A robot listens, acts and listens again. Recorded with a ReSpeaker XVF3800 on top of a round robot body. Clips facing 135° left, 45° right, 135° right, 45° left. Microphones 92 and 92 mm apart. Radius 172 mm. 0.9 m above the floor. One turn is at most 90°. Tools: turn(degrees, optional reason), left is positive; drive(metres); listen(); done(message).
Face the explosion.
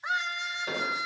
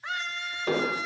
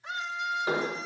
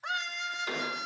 turn(degrees=-70, reason="The explosion: 70° right.")
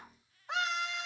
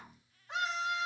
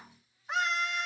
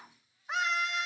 done("Facing where the explosion came from. I can't hear it now.")